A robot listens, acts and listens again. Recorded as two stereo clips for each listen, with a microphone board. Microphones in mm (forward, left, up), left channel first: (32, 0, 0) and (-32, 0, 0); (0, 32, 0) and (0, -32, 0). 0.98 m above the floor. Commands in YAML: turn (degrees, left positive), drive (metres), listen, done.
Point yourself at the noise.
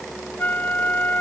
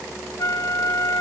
turn: 60
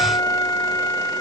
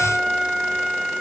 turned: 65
done: "Found it: a flute, straight ahead."